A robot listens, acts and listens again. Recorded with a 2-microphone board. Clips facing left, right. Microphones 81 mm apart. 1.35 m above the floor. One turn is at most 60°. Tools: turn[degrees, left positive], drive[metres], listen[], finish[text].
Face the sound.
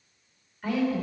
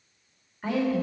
Thought: The woman speaking: about 25° right or 155° right.
Action: turn[-25]
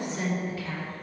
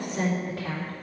Thought: So it is at 115° right.
Action: turn[-60]
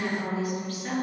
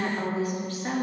Thought: The woman speaking is now 30° right.
Action: turn[-30]
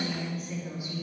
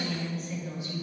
Thought: The woman speaking is now 10° left.
Action: turn[10]
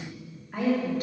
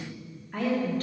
Thought: The woman speaking is now 10° left.
Action: turn[10]
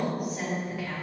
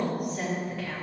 Action: finish[Found it: a woman speaking, straight ahead, 2 to 4 m away.]